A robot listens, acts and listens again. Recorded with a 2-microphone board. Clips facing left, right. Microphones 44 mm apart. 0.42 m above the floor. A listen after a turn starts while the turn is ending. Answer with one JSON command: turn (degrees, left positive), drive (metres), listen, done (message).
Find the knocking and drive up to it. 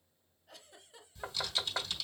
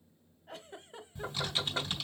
{"turn": 25}
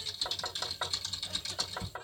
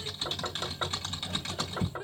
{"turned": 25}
{"drive": 1.0}
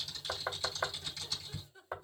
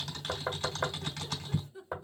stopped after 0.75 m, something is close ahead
{"done": "I am next to the knocking."}